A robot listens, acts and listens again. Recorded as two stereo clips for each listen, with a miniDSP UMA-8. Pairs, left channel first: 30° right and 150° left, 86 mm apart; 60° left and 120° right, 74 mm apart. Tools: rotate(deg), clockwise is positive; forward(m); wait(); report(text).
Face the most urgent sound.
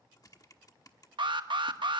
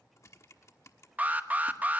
rotate(-170)
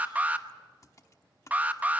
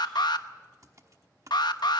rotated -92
rotate(-80)
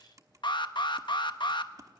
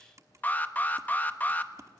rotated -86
report("Facing the alarm.")